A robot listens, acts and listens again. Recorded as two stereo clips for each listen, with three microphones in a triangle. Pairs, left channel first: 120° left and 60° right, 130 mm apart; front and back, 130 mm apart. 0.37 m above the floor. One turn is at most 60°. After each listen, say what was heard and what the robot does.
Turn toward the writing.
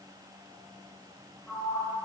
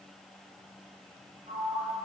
Keep listening.
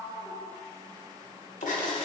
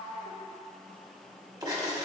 The writing: 125° left. Turn 60° left.
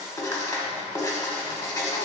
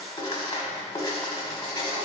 The writing is now 60° left. Turn 60° left.
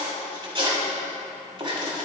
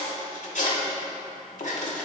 The writing is now 10° right. Turn 10° right.
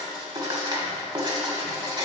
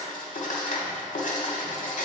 Facing the writing, 1 to 2 m away.